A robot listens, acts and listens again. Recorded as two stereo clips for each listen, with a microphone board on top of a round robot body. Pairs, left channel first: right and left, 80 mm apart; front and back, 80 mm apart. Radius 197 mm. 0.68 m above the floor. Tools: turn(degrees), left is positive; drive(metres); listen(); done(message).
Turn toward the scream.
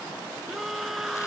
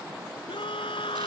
done("Facing the scream.")